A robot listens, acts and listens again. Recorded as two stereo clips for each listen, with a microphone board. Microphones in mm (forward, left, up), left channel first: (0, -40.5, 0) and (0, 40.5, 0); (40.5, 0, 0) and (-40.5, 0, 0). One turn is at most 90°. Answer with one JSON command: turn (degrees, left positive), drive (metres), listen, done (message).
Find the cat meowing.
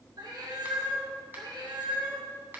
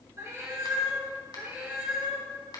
{"turn": 90}
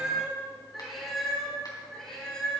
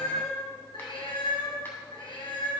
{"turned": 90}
{"turn": -10}
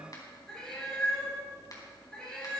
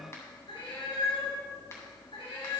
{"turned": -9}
{"turn": -10}
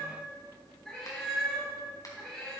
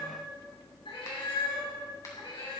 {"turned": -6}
{"done": "Facing the cat meowing."}